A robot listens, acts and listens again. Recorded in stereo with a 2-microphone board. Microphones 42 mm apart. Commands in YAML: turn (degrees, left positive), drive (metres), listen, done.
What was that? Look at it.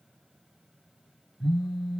turn: -30
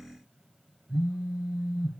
turn: -145
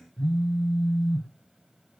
turn: 15
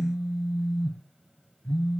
done: "Facing the phone buzzing."